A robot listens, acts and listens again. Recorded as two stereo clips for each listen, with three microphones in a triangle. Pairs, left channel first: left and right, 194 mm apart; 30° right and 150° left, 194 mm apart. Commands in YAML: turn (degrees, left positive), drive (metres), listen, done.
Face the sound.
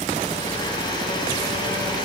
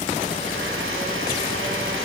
turn: 160
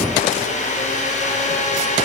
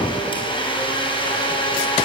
turn: 35
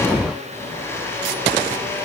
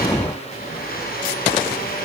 turn: 10
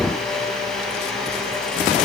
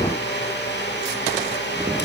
done: "Facing the blender."